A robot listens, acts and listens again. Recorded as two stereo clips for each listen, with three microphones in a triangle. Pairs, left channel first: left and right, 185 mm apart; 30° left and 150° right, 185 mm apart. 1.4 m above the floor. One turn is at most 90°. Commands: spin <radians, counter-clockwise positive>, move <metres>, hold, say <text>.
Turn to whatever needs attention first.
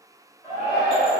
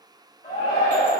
spin 0.35
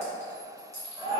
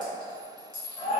say Found it: a shout, straight ahead, 1 to 2 m away.